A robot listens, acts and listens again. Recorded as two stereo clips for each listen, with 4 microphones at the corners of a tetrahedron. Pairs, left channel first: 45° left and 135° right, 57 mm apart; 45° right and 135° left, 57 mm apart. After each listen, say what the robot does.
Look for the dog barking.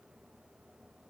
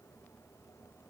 Keep listening.
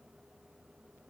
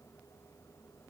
Keep listening.
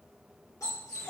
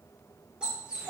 Turn 60° left.
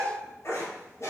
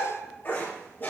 Turn 10° left.
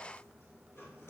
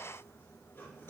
Keep listening.
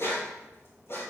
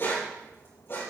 Found it: a dog barking, straight ahead.